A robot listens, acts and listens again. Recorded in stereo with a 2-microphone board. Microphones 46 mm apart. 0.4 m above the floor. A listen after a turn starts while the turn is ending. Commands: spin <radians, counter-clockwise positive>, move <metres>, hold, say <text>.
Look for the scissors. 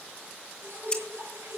spin 0.35
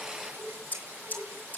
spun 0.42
spin 2.36
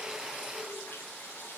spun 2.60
spin -0.26
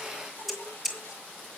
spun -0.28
say Found it: scissors, straight ahead, 2 to 4 m away.